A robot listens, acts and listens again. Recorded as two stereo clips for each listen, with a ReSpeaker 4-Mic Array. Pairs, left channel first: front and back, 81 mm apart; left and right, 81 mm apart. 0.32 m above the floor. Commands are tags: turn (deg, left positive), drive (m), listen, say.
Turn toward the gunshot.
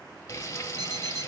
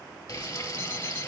<listen/>
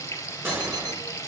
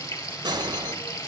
<turn deg="-120"/>
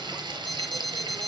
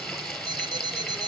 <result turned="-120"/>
<say>Facing where the gunshot came from. I can't hear it now.</say>